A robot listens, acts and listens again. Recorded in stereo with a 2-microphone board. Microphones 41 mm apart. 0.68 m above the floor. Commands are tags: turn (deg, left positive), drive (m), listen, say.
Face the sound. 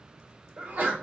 <turn deg="-45"/>
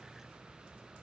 <listen/>
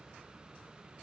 <say>I heard a sneeze, but can't make it out now. It was about straight ahead or 90° right.</say>